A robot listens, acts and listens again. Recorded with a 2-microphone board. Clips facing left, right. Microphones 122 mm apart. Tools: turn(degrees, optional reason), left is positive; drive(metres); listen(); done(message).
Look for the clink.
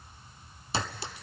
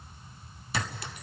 turn(degrees=30, reason="The clink: about 30° left or 150° left.")
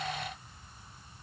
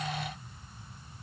listen()
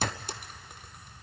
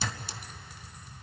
turn(degrees=115, reason="So it is at 115° left.")
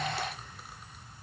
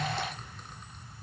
listen()
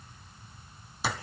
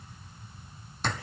turn(degrees=10, reason="The clink is now 10° left.")
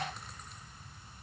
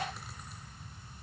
listen()
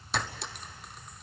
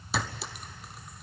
done("Found it: a clink, straight ahead, under 1 m away.")